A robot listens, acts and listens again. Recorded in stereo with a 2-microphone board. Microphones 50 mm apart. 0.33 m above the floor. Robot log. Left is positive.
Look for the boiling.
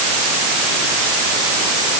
cmd idle
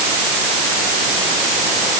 cmd idle
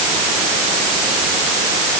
end: I can't make out boiling to turn to.